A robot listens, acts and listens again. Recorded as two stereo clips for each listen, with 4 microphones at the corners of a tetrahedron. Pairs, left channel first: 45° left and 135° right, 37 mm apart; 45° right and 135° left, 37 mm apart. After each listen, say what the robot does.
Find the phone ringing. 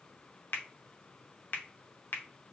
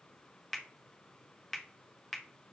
Keep listening.
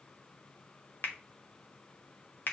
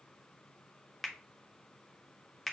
Keep listening.
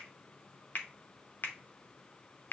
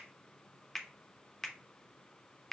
I can't make out a phone ringing to turn to.